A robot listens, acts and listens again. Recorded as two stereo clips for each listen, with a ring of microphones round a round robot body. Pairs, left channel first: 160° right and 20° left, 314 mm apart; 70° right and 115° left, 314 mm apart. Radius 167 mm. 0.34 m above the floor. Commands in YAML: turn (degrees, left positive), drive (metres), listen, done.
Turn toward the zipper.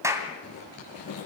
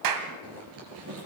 turn: 160
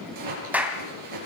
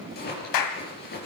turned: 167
done: "Found it: a zipper, straight ahead, over 4 m away."